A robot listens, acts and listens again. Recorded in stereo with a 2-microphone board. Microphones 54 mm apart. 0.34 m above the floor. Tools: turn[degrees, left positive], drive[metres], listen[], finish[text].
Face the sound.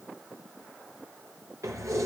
Action: turn[-90]
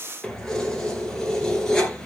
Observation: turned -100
Thought: So it is at 15° left.
Action: turn[15]
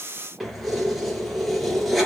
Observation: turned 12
Action: finish[Found it: keys jangling, straight ahead.]